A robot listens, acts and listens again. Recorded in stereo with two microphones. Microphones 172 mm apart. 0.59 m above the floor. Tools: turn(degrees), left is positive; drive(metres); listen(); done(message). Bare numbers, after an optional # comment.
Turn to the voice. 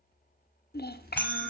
# The child speaking: about 70° left or 110° left.
turn(70)
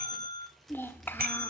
# So it is at 15° left.
turn(15)
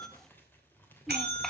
listen()
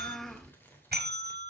done("Facing the child speaking.")